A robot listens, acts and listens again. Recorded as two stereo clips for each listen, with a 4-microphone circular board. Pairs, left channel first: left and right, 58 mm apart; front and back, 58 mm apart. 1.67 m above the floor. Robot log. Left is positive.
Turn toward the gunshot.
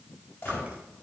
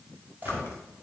note: The gunshot: 120° left.
cmd yaw +120
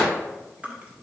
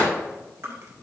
end: Facing where the gunshot came from. I can't hear it now.